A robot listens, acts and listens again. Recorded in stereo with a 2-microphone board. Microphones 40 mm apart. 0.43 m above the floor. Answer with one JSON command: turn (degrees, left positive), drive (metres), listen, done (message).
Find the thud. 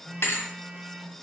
{"turn": 90}
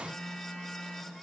{"done": "Facing where the thud came from. I can't hear it now."}